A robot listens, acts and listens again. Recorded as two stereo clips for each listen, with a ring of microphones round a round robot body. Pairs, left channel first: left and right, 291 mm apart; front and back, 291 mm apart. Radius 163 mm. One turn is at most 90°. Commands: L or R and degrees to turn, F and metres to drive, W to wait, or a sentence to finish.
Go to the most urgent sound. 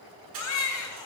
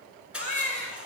L90
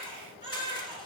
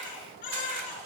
L20
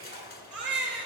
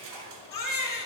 F1.0
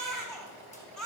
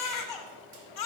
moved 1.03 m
F1.0
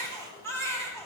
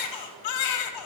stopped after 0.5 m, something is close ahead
Arrived at the baby crying, straight ahead.